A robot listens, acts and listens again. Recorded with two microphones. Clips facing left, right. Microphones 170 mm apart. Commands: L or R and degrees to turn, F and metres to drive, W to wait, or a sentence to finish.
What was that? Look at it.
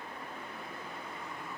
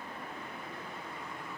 W
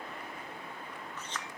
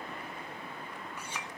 R30
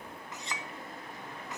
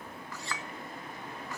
L20
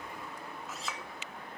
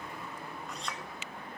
Facing the clink.